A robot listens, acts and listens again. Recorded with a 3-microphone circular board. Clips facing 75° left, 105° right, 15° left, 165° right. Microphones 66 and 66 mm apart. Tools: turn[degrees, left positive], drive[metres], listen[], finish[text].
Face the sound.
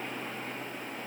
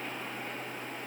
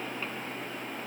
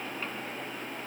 Action: listen[]
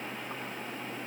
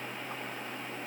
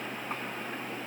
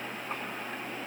Action: listen[]
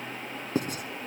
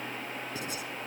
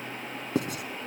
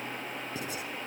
Thought: The writing: 35° left.
Action: turn[35]
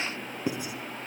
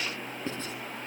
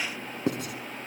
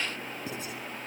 Action: finish[Facing the writing.]